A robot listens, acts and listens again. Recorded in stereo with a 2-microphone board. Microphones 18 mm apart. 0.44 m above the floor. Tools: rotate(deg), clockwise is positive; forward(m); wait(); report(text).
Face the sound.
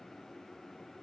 wait()
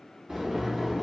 rotate(70)
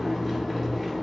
report("Found it: boiling, straight ahead.")